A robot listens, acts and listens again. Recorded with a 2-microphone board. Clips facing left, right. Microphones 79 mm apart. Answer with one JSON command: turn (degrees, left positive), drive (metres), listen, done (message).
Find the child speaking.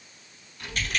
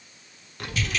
{"turn": -65}
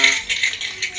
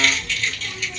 {"turn": -45}
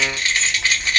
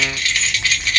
{"turn": -10}
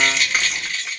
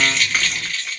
{"done": "Found it: a child speaking, straight ahead, 1 to 2 m away."}